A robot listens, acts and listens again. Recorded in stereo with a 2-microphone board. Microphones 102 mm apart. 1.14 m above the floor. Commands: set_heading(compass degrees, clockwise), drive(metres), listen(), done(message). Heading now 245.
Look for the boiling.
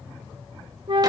listen()
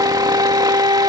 listen()
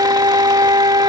done("I can't make out boiling to turn to.")